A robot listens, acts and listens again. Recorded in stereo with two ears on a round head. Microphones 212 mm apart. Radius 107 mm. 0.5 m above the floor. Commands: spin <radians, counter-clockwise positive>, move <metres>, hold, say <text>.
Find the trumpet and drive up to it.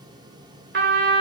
spin -0.87
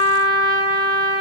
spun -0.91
spin -1.13
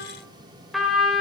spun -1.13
move 1.0
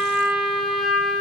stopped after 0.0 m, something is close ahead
say Blocked. The trumpet is further on, straight ahead.